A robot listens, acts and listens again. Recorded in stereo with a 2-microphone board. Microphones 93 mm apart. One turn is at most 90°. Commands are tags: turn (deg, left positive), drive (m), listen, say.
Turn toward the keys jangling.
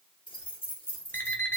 <turn deg="70"/>
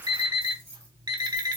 <listen/>
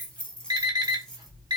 <say>Facing the keys jangling, 1 to 2 m away.</say>